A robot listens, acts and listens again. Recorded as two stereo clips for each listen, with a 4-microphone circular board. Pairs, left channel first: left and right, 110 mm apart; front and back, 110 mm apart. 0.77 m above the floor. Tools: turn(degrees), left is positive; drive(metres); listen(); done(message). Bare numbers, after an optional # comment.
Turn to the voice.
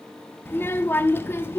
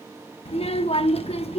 # The child speaking: 20° left.
turn(20)
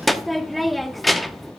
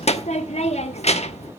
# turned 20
done("Found it: a child speaking, straight ahead, under 1 m away.")